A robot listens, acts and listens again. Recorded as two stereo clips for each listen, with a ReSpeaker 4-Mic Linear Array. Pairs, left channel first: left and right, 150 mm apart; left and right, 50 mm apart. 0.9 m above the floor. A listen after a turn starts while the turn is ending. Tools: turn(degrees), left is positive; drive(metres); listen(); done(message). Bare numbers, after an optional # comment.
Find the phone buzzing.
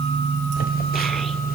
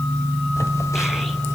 turn(90)
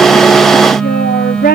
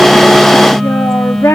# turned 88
done("Found it: a phone buzzing, straight ahead.")